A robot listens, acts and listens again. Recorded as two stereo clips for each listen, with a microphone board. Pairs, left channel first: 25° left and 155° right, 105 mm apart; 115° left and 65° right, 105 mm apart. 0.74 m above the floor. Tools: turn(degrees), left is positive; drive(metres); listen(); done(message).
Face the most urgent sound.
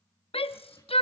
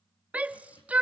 turn(degrees=10)
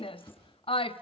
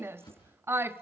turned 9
done("Found it: a shout, straight ahead.")